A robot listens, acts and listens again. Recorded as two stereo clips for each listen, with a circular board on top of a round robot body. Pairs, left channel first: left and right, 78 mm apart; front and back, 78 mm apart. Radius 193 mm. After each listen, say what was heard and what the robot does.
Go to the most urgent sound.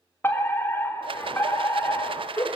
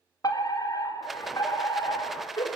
The fire alarm: 30° left. Turn 30° left.
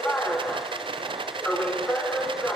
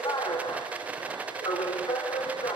The fire alarm is now 15° left. Turn 15° left.
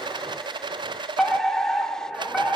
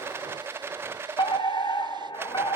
Drive 1.0 m forward.
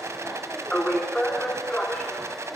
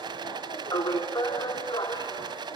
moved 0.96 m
The fire alarm is now 10° left. Turn 10° left.
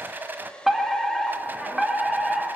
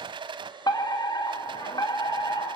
Drive 1.0 m forward.
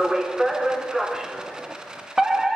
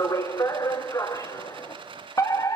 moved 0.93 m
The fire alarm is now 10° right. Turn 10° right.
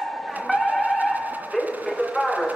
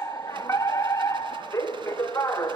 Drive 1.0 m forward.
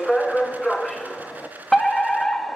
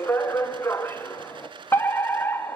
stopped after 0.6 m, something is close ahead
The fire alarm is now 10° left. Turn 10° left.
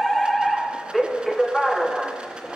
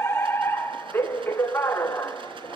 I am next to the fire alarm.